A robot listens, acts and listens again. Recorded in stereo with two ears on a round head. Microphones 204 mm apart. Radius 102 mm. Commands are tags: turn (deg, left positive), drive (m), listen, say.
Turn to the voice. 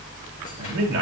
<turn deg="-55"/>
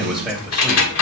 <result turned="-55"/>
<say>Found it: a man speaking, straight ahead, 2 to 4 m away.</say>